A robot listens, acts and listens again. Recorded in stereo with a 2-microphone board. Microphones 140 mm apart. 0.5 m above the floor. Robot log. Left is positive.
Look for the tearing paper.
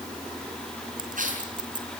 note: The tearing paper: about 75° right or 105° right.
cmd yaw -75
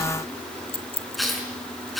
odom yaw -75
end: Facing the tearing paper.